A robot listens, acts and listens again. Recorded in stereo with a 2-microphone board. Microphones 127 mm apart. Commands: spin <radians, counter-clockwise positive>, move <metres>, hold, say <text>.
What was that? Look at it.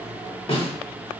spin 0.79
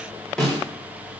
say Found it: a snare drum, straight ahead.